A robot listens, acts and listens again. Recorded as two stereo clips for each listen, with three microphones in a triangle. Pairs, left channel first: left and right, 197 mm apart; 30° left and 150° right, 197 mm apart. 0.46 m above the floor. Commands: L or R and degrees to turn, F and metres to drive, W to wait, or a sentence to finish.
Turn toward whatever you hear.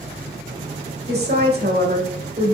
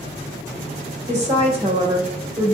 R80
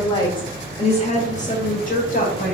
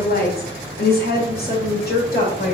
L60
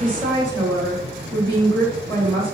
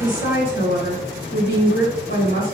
L20
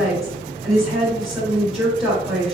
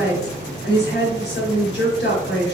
Facing the woman speaking, 1 to 2 m away.